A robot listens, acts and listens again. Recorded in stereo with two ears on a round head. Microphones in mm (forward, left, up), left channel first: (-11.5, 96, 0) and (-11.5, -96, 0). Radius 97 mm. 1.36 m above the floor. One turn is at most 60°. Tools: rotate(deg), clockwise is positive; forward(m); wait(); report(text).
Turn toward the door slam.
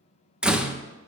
rotate(30)
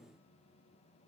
wait()
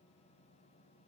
report("I heard a door slam, but can't make it out now. It was about 25° left or 145° right.")